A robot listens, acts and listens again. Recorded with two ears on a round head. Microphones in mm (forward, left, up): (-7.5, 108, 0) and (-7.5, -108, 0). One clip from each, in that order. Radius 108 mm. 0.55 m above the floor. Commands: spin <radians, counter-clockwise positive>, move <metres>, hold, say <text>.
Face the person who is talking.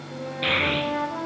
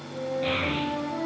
spin 1.05
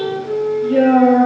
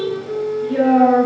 say Found it: a child speaking, straight ahead.